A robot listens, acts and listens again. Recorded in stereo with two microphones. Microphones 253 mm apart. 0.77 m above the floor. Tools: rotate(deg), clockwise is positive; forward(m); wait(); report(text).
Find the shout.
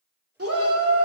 rotate(65)
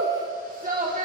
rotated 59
rotate(35)
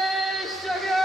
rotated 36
report("Facing the shout, 2 to 4 m away.")